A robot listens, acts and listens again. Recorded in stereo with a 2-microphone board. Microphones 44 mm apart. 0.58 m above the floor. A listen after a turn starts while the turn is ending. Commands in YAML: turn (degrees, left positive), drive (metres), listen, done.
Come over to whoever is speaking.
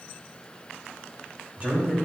turn: -35
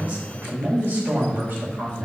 turn: -110
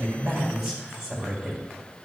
drive: 1.0
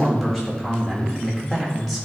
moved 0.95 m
turn: 10
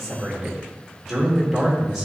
drive: 1.0
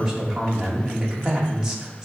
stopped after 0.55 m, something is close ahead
turn: -15
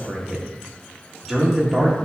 done: "I am next to the man speaking."